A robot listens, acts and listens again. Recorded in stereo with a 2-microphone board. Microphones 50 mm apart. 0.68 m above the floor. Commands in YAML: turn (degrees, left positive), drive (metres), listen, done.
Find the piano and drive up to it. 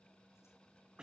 listen: true
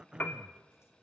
turn: 35
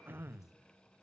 listen: true
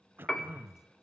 turn: 10
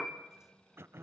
drive: 1.0
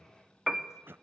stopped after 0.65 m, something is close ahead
turn: -10
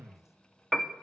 done: "I am next to the piano."